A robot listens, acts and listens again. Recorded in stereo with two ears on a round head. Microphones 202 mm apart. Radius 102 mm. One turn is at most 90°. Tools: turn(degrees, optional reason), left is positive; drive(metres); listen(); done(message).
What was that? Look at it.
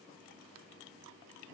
listen()
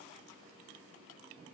listen()
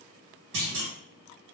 turn(degrees=-60, reason="The clunk: about 60° right or 120° right.")
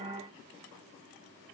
listen()
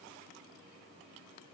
done("I heard a clunk, but can't make it out now. It was about straight ahead or 60° right.")